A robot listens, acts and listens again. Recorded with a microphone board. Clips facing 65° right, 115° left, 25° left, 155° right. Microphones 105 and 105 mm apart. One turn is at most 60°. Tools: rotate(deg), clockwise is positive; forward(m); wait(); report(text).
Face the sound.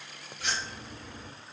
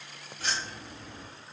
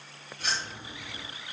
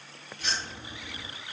rotate(-60)
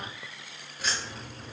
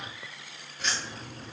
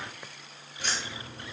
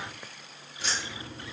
rotate(-30)
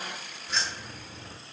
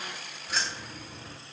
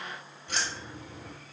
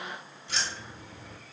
rotate(-40)
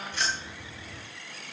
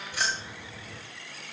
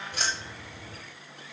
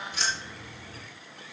rotate(-40)
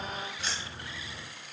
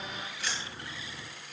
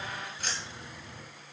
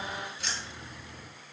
rotate(15)
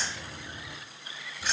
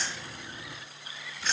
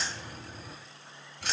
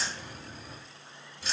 rotate(-10)
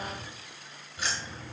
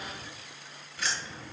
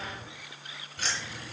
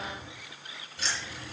report("Found it: keys jangling, straight ahead, 1 to 2 m away.")